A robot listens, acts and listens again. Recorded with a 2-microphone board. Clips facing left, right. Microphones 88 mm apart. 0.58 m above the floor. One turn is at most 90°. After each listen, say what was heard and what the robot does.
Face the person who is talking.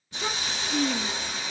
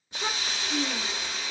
The child speaking: about 20° right or 160° right. Turn 20° right.
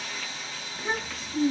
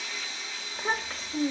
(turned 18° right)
So it is at 145° right. Turn 90° right.
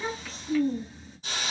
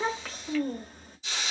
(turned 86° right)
The child speaking is now 55° right. Turn 55° right.
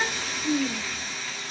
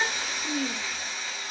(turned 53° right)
Found it: a child speaking, straight ahead.